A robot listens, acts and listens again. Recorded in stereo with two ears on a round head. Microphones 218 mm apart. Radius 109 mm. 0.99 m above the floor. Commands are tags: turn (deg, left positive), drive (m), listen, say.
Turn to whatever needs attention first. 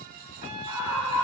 <turn deg="65"/>
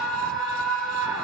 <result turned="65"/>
<say>Facing the scream.</say>